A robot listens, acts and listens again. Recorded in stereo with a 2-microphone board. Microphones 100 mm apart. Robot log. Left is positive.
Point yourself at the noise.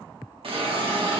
note: The hiss: about 70° right or 110° right.
cmd yaw -70
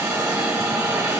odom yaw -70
note: So it is at 25° right.
cmd yaw -25
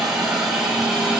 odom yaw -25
end: Found it: a hiss, straight ahead, under 1 m away.